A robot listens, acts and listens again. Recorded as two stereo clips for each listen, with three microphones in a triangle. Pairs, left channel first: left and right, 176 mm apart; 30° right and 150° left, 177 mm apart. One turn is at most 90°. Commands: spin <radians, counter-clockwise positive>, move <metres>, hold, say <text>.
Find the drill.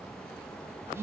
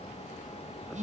hold
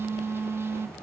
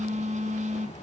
hold
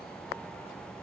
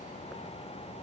say I can't make out a drill, only a phone buzzing.